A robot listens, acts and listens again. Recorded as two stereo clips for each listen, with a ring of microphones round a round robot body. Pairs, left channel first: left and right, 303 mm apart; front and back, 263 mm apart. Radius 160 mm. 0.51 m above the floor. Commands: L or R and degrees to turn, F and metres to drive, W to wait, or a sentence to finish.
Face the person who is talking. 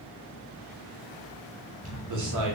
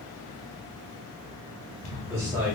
R100
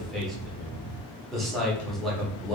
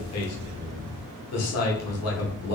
Found it: a man speaking, straight ahead.